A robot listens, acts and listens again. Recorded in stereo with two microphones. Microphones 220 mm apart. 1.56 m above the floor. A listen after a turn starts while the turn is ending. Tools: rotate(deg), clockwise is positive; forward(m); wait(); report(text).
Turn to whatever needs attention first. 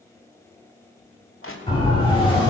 rotate(-20)
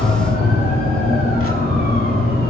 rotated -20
rotate(-140)
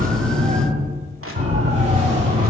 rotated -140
rotate(30)
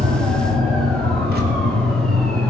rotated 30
report("Facing the siren.")